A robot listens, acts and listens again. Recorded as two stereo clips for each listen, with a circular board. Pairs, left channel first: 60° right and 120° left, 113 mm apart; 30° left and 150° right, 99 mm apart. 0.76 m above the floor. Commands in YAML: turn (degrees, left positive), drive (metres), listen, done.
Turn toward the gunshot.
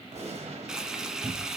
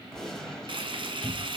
turn: 115
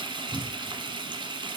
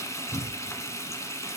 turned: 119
done: "I heard a gunshot from this way, but can't make it out now."